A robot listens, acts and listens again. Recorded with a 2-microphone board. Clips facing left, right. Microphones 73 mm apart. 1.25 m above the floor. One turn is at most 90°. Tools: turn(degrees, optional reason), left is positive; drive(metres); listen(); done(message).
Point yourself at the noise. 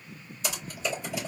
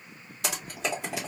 turn(degrees=-90)
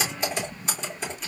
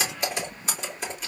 done("Facing the typing on a keyboard.")